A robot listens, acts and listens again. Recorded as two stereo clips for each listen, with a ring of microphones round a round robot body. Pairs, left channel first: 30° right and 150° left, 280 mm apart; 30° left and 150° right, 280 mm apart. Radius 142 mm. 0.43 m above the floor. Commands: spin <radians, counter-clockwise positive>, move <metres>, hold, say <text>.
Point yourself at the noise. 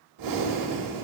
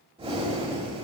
spin 2.44
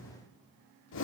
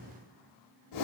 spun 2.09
spin 0.35
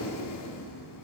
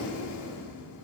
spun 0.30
say Facing the breathing.